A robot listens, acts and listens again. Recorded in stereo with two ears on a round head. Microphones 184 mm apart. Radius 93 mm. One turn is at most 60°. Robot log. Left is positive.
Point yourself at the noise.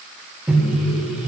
cmd yaw -30
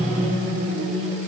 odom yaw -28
note: So it is at 145° right.
cmd yaw -60
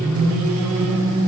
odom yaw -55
note: The microwave is now 95° right.
cmd yaw -60
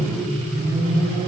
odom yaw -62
note: The microwave is now 30° right.
cmd yaw -30
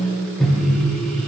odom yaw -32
end: Facing the microwave.